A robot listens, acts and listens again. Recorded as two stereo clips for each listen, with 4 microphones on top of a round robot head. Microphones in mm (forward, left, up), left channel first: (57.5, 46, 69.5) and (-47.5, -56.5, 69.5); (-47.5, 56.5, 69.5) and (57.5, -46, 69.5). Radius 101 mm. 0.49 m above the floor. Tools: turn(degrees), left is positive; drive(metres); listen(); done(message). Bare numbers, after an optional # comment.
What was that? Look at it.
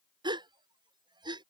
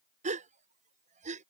# The gasp: 75° right.
turn(-75)
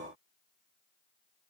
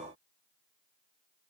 done("Facing where the gasp came from. I can't hear it now.")